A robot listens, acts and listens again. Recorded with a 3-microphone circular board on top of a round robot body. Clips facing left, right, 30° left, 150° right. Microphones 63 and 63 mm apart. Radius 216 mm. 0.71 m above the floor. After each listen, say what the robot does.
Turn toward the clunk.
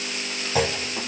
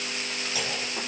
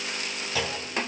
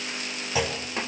Turn 135° left.
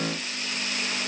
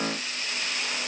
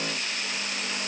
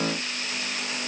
Facing where the clunk came from. I can't hear it now.